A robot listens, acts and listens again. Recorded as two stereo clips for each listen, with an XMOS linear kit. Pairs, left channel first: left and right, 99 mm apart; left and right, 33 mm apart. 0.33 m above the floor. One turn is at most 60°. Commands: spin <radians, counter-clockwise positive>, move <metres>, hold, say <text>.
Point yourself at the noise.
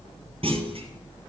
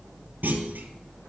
spin -1.05
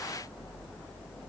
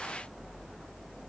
spin -0.52
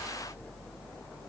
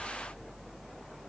say Facing where the clunk came from. I can't hear it now.